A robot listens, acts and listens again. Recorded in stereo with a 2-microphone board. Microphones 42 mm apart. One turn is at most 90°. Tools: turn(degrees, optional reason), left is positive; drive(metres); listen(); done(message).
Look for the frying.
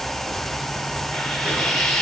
turn(degrees=30)
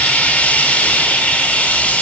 turn(degrees=90, reason="So it is at 145° left.")
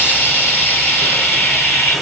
turn(degrees=65, reason="The frying is now 65° left.")
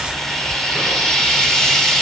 turn(degrees=15, reason="The frying is now 15° left.")
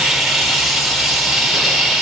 done("Found it: frying, straight ahead, 2 to 4 m away.")